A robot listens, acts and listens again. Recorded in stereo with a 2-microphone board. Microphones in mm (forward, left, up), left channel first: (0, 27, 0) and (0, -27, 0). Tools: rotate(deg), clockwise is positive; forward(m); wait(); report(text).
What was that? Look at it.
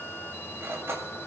rotate(55)
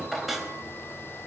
report("Facing the cutlery clinking.")